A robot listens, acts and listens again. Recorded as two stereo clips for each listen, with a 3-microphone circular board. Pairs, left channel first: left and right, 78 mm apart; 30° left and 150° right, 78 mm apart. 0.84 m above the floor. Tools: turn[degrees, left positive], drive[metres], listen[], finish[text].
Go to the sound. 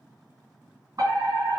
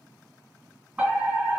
Thought: The fire alarm: 85° right.
Action: turn[-85]
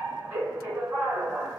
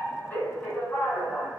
Thought: The fire alarm is now 35° right.
Action: turn[-35]
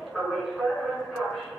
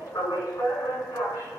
Action: drive[1.0]
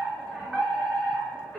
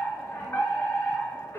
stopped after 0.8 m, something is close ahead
Thought: The fire alarm is now 10° right.
Action: turn[-10]
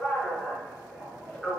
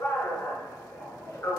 Action: finish[I am next to the fire alarm.]